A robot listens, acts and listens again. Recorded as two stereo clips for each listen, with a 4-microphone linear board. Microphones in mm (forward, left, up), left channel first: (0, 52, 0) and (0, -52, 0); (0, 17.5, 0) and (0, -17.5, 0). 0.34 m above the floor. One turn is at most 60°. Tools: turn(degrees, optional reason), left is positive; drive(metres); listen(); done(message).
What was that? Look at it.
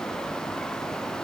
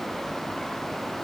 listen()
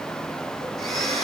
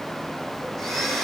turn(degrees=30)
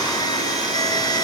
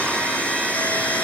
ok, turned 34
turn(degrees=60, reason="So it is at 145° left.")
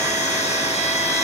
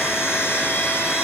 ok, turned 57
turn(degrees=60, reason="The blender is now 85° left.")
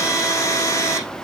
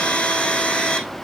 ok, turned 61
turn(degrees=25, reason="The blender is now 25° left.")
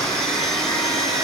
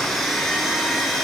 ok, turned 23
done("Facing the blender, over 4 m away.")